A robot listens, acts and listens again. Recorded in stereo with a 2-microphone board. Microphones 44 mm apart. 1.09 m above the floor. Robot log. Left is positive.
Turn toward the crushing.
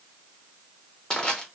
note: The crushing: about 15° left or 165° left.
cmd yaw +15
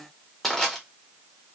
end: Facing the crushing.